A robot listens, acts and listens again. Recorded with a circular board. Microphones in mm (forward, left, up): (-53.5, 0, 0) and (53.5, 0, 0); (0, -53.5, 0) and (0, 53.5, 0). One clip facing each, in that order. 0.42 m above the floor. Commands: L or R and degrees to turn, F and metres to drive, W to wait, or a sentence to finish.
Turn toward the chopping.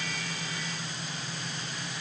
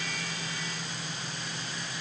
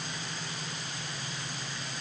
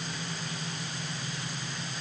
W
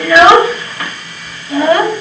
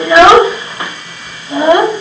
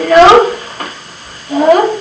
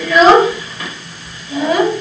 W
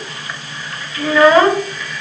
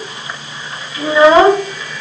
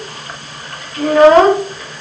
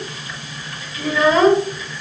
I can't make out chopping, only a child speaking.